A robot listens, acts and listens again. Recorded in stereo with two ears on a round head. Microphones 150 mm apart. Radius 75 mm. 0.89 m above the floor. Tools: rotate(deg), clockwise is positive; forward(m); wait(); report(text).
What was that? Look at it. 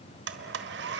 rotate(70)
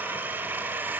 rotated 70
rotate(10)
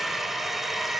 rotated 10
report("Facing the blender, 1 to 2 m away.")